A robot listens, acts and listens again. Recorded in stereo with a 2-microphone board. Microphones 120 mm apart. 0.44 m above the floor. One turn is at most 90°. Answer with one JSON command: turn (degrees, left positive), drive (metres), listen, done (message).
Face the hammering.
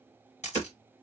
{"turn": 40}
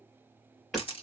{"done": "Found it: hammering, straight ahead."}